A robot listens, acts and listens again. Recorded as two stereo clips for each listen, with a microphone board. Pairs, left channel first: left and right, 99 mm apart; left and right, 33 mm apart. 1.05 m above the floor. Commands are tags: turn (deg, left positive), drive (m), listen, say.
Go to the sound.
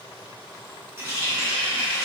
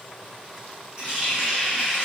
<turn deg="-25"/>
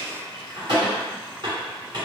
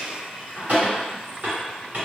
<turn deg="-125"/>
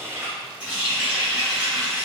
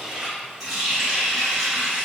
<turn deg="-15"/>
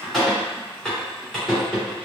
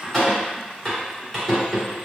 <drive m="1.0"/>
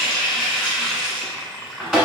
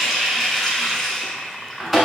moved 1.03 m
<drive m="1.0"/>
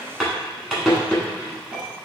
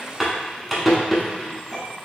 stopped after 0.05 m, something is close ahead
<turn deg="-10"/>
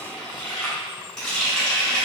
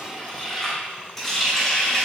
<say>I am next to the running tap.</say>